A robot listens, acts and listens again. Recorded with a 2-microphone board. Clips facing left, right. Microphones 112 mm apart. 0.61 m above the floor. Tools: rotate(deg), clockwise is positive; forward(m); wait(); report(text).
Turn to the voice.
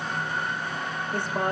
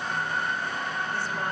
rotate(-55)
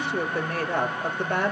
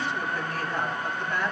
rotate(-75)
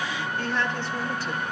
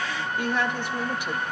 rotate(15)
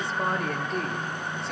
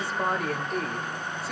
report("Found it: a woman speaking, straight ahead, 2 to 4 m away.")